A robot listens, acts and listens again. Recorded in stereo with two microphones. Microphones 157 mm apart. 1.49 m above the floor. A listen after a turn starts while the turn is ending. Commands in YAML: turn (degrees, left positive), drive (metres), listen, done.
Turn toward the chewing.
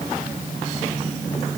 listen: true
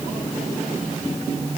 listen: true
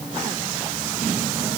done: "I can't make out chewing."